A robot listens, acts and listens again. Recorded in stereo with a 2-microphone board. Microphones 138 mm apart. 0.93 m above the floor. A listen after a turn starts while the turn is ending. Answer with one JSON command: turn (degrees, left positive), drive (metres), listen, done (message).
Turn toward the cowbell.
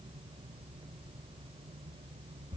{"listen": true}
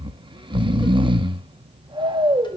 {"listen": true}
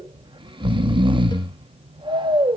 {"done": "I can't make out a cowbell, only snoring."}